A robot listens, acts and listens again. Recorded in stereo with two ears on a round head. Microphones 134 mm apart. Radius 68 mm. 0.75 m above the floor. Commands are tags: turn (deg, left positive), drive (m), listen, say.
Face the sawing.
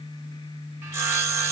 <turn deg="-15"/>
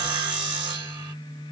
<turn deg="-150"/>
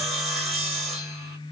<say>Facing the sawing, 1 to 2 m away.</say>